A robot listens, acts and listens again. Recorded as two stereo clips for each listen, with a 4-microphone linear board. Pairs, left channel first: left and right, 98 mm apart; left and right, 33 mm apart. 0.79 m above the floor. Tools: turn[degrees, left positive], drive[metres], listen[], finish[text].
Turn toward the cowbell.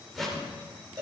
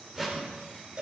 Thought: The cowbell: about 40° right or 140° right.
Action: turn[-40]
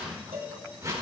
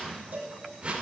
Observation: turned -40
Thought: So it is at 100° right.
Action: turn[-100]
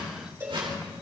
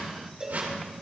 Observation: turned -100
Thought: The cowbell is now 25° right.
Action: turn[-25]
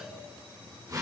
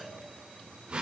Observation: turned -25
Action: listen[]
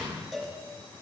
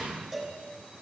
Action: finish[Facing the cowbell.]